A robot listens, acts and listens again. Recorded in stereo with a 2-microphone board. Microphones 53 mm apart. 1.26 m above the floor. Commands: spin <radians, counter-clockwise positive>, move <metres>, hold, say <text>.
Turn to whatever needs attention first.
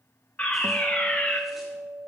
spin 0.44
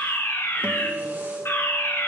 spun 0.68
spin 1.92
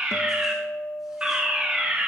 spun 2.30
spin -0.35
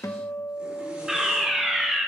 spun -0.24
spin -0.17
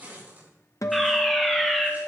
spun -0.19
say Found it: a fire alarm, straight ahead.